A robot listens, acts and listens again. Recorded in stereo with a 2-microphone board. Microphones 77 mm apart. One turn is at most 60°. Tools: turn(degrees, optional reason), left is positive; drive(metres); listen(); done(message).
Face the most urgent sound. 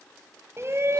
turn(degrees=-35, reason="The shout: about 35° right or 145° right.")
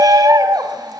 turn(degrees=-60, reason="So it is at 100° right.")
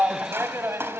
turn(degrees=-40, reason="The shout is now 40° right.")
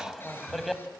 done("Facing the shout.")